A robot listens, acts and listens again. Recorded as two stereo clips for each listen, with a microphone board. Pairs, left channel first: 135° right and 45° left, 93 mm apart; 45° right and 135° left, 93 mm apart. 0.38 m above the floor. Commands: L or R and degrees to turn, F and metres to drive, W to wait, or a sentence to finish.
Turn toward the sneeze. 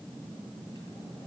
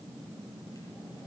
W
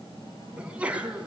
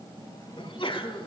R30
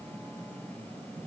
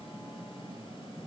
I heard a sneeze from this way, but can't make it out now.